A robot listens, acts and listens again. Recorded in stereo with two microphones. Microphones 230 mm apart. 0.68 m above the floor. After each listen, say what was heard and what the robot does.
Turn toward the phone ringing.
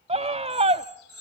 The phone ringing: about 70° left or 110° left. Turn 70° left.
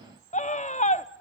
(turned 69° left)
Keep listening.
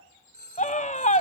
So it is at 45° left. Turn 45° left.
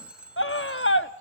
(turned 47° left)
Facing the phone ringing, 2 to 4 m away.